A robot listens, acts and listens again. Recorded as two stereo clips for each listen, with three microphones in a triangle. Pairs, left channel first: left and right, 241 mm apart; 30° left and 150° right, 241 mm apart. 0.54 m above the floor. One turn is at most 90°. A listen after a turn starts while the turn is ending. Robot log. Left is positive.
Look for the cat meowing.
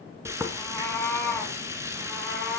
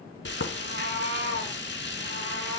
note: The cat meowing: straight behind.
cmd yaw +90
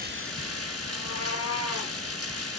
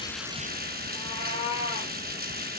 note: The cat meowing is now 95° left.
cmd yaw +90
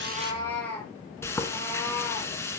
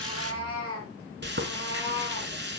note: The cat meowing is now 10° left.
cmd yaw +10
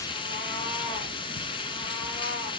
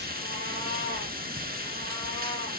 cmd idle
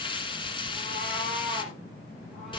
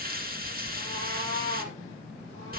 end: Facing the cat meowing.